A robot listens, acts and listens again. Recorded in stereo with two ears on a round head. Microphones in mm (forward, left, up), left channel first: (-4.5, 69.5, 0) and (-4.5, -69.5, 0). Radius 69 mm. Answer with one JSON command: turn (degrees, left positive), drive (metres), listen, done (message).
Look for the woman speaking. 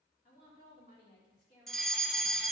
{"turn": 70}
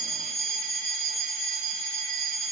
{"listen": true}
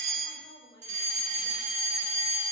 {"turn": 35}
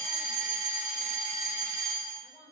{"listen": true}
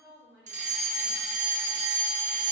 {"turn": -15}
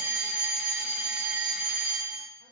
{"listen": true}
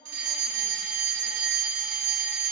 {"done": "Found it: a woman speaking, straight ahead."}